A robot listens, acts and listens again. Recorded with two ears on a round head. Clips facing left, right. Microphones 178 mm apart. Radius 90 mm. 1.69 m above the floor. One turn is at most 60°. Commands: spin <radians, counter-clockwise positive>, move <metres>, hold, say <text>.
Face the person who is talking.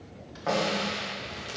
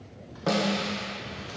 hold
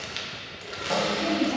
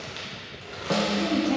spin -1.05
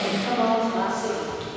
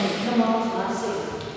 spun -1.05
spin -0.35
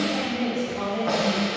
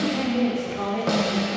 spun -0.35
say Found it: a woman speaking, straight ahead.